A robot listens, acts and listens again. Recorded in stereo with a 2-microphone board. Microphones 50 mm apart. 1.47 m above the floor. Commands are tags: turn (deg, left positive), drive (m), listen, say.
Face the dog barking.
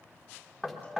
<listen/>
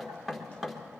<listen/>
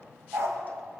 <turn deg="-65"/>
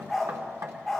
<say>Facing the dog barking.</say>